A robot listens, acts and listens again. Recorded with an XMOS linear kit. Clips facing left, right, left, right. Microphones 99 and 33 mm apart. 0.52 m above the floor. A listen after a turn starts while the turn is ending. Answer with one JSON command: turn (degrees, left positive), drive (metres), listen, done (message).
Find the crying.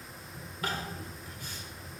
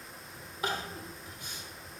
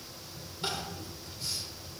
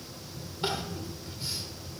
{"turn": -20}
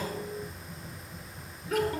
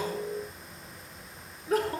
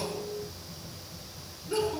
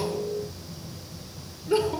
{"turn": -140}
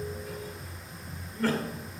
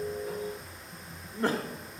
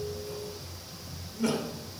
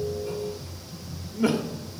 {"turn": -25}
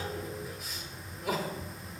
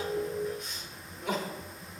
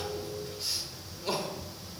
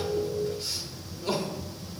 {"done": "Found it: crying, straight ahead, 1 to 2 m away."}